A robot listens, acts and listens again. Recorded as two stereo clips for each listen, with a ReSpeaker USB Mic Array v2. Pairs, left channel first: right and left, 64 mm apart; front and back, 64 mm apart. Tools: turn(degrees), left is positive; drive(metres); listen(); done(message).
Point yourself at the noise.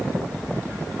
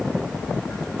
listen()
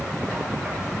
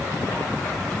listen()
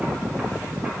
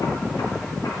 done("I can't make out anything.")